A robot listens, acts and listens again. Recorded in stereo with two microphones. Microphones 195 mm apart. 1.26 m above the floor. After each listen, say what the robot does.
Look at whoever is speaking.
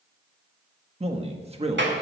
Turn 30° right.
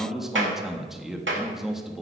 Facing the man speaking.